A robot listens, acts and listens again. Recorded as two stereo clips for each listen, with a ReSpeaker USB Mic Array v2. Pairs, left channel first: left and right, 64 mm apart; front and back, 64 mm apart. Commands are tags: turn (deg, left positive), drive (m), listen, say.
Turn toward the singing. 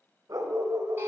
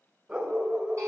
<listen/>
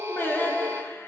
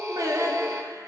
<turn deg="150"/>
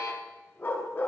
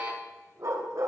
<listen/>
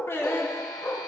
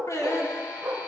<turn deg="40"/>
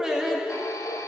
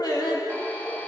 <turn deg="-10"/>
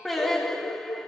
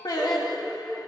<say>Found it: singing, straight ahead.</say>